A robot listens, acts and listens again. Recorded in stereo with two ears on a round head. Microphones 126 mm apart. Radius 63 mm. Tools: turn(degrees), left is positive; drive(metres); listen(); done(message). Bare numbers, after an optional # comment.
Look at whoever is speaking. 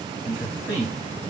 # The man speaking: about 15° right or 165° right.
turn(-15)
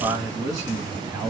# So it is at 155° right.
turn(-155)
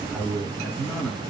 # The man speaking is now 10° left.
turn(10)
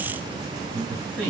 done("Facing the man speaking.")